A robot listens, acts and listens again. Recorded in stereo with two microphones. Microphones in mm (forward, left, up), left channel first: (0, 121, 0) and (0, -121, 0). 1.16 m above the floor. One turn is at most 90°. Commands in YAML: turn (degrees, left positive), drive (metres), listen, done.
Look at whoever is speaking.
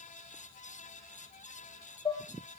listen: true
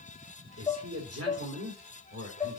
turn: -90
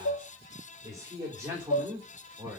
turn: -10
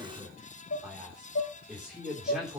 done: "Found it: a man speaking, straight ahead, 2 to 4 m away."